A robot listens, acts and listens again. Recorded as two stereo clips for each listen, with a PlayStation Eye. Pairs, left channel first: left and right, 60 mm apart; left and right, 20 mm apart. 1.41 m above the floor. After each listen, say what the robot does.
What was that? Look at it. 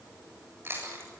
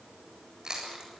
Turn 45° right.
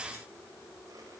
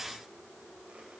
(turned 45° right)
Keep listening.
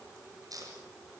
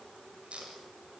Turn 90° right.
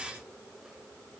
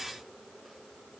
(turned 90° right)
Keep listening.
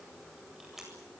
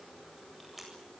Found it: chewing, straight ahead, over 4 m away.